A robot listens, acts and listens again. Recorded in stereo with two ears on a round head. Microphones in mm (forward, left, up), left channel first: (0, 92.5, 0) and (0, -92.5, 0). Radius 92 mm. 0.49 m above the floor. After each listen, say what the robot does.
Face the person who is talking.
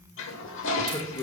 Turn 20° left.
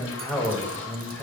Facing the man speaking.